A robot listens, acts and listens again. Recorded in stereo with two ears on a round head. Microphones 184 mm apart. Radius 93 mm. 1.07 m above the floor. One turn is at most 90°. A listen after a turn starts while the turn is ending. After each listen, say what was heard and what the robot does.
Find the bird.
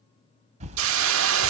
The bird: about 35° right or 145° right. Turn 35° right.
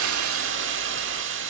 Keep listening.
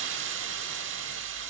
Keep listening.
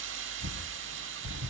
So it is at 110° right. Turn 90° right.
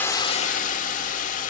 Nothing new. It was at 20° right. Turn 20° right.
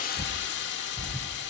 The bird is now 10° left. Turn 10° left.
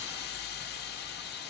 Keep listening.
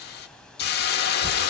Keep listening.
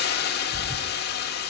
Facing where the bird came from. I can't hear it now.